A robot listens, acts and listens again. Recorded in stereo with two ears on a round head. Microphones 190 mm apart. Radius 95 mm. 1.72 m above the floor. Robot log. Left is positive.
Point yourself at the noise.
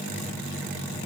cmd idle
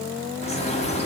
note: The bird: about 30° left or 150° left.
cmd yaw +30
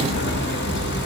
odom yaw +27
note: So it is at 115° left.
cmd yaw +115
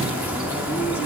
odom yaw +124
note: The bird is now 10° right.
cmd yaw -10
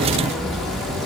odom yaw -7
end: Found it: a bird, straight ahead, 1 to 2 m away.